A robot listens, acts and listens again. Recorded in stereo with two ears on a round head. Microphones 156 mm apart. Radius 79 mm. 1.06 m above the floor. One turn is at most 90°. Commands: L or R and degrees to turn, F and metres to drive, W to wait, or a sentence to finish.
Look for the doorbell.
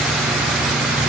W
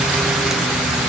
W
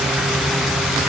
I can't make out a doorbell.